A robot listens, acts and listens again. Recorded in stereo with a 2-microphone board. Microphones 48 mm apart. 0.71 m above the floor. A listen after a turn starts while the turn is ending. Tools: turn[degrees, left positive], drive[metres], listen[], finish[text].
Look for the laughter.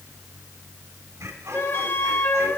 Action: turn[-90]
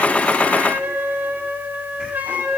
Action: listen[]
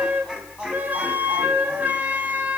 Thought: The laughter is now 20° right.
Action: turn[-20]
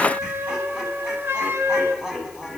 Thought: The laughter is now 10° right.
Action: turn[-10]
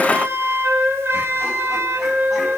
Action: listen[]
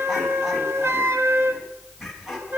Action: finish[Found it: laughter, straight ahead, over 4 m away.]